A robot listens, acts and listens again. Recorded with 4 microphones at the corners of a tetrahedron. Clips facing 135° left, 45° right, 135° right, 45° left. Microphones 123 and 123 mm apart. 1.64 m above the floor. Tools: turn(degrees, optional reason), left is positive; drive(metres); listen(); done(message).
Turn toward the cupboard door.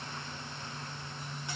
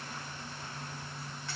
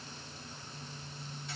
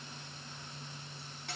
listen()
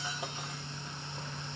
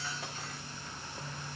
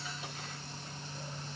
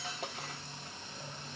listen()
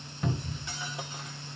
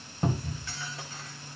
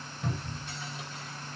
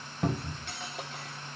turn(degrees=10, reason="The cupboard door: 10° left.")
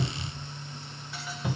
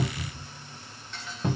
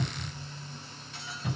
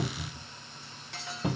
done("Facing the cupboard door, 1 to 2 m away.")